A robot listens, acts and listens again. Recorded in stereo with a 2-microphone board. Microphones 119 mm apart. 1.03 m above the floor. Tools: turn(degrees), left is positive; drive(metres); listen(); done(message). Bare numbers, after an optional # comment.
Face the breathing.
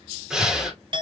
turn(-30)
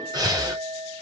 # So it is at 145° right.
turn(-145)
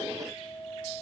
listen()
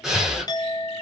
done("Found it: breathing, straight ahead.")